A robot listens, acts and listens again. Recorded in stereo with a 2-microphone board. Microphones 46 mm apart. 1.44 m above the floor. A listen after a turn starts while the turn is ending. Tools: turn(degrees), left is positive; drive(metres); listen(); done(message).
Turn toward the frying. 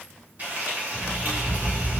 turn(degrees=-45)
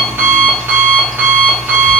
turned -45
listen()
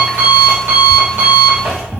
listen()
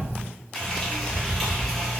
done("Found it: frying, straight ahead.")